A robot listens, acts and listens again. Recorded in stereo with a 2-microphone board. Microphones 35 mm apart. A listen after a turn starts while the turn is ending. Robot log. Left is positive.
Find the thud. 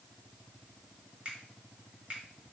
cmd idle
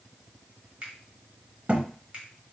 note: The thud: about 35° right or 145° right.
cmd yaw -35
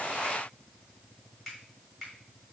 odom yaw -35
cmd idle
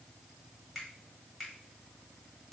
end: I heard a thud, but can't make it out now. It was about straight ahead or 110° right.